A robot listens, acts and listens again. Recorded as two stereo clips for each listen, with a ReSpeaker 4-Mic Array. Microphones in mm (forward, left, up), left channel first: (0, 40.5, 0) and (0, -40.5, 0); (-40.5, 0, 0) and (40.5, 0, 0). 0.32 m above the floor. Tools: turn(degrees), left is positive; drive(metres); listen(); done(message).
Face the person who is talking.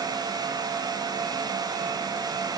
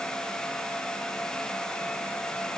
listen()
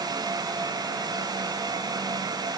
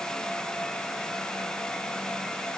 listen()
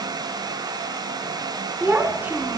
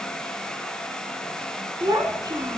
turn(degrees=-25)
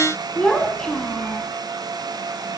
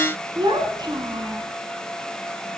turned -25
turn(degrees=10)
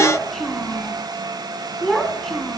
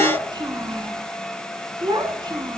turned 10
done("Facing the child speaking.")